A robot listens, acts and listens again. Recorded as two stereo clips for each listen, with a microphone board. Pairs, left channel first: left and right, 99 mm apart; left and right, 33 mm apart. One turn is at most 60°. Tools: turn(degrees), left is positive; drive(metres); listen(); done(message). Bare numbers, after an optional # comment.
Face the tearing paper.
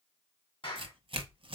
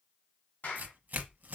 # The tearing paper: about 55° right or 125° right.
turn(-55)
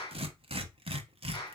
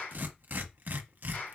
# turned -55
# So it is at 65° right.
turn(-60)
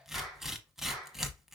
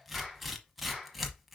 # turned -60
done("Facing the tearing paper.")